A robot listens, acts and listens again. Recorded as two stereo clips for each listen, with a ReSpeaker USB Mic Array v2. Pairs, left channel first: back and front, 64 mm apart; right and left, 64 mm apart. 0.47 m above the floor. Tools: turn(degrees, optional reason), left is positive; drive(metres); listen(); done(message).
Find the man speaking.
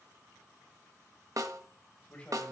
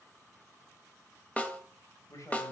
turn(degrees=-115, reason="The man speaking: 115° right.")
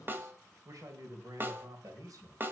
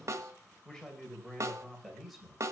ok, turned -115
done("Facing the man speaking.")